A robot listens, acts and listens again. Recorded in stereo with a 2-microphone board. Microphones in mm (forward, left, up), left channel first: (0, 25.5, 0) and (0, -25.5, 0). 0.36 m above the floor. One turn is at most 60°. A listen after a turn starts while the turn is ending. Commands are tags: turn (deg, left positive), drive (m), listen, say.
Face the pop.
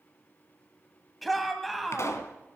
<turn deg="60"/>
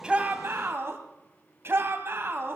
<listen/>
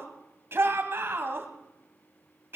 <say>I heard a pop, but can't make it out now. It was about 5° left or 55° left.</say>